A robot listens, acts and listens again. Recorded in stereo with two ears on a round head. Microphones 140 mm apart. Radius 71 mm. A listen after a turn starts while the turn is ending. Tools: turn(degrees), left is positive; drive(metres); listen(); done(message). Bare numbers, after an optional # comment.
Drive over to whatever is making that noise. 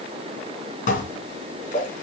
# The dishes clattering: about 55° left or 125° left.
turn(55)
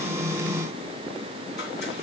listen()
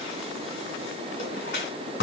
# So it is at 70° left.
turn(70)
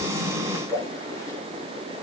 # The dishes clattering is now 20° left.
turn(20)
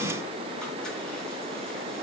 listen()
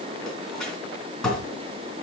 drive(1.0)
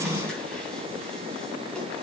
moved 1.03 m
listen()
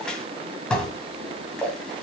drive(1.0)
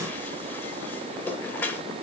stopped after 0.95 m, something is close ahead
# The dishes clattering is now 15° left.
turn(15)
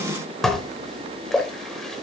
done("I am next to the dishes clattering.")